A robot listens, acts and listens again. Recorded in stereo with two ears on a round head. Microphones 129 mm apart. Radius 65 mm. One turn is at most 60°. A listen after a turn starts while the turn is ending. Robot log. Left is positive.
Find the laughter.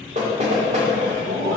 note: The laughter: about 65° right or 115° right.
cmd yaw -60
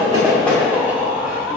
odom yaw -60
end: Facing the laughter.